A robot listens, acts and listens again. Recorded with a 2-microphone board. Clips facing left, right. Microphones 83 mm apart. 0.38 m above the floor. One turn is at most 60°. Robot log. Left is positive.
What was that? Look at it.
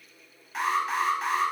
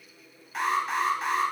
cmd yaw +30
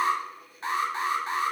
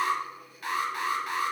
note: So it is at 150° left.
cmd yaw +60
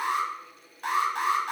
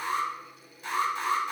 note: The alarm is now 110° left.
cmd yaw +60
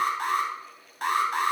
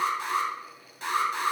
note: The alarm is now 65° left.
cmd yaw +60
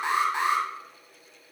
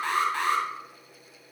note: The alarm is now 20° left.
cmd yaw +20
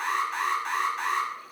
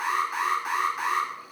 end: Found it: an alarm, straight ahead, 1 to 2 m away.